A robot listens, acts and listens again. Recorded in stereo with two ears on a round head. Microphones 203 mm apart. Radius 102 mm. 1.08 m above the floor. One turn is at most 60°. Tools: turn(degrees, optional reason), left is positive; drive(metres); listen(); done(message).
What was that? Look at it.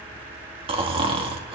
turn(degrees=-25, reason="The snoring: about 25° right or 155° right.")
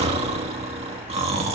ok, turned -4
turn(degrees=-30, reason="The snoring: about 30° right or 150° right.")
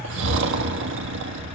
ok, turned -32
turn(degrees=-60, reason="So it is at 115° right.")
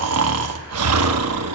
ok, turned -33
turn(degrees=-60, reason="The snoring is now 85° right.")
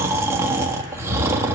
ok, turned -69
turn(degrees=-15, reason="The snoring is now 15° right.")
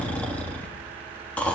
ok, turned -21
done("Facing the snoring, 1 to 2 m away.")